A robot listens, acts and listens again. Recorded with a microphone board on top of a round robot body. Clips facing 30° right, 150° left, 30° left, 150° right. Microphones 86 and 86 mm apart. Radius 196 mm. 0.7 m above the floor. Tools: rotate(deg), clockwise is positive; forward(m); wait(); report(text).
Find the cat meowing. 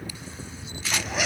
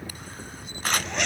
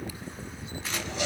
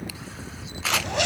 wait()
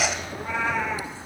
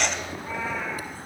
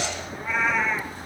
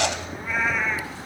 rotate(60)
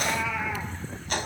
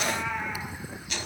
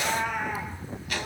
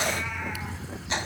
rotate(20)
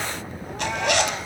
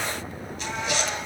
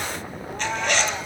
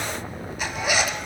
wait()
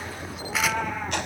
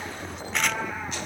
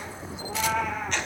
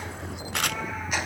report("Facing the cat meowing, over 4 m away.")